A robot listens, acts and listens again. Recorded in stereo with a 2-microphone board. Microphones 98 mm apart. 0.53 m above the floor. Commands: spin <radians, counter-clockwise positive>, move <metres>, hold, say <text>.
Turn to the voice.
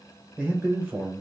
spin -0.52
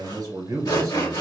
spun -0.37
spin -2.53
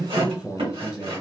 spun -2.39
spin -0.17
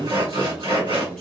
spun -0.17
say Facing the man speaking.